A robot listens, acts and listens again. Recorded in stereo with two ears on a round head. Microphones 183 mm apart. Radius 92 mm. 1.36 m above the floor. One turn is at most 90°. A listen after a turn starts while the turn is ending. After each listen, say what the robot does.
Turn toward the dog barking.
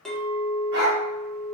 Turn 45° right.
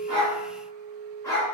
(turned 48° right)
Turn 15° left.
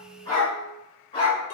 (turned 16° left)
Turn 30° left.
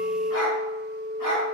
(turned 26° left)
Turn 25° left.
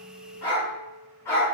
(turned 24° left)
Turn 15° left.
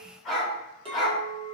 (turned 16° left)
Facing the dog barking.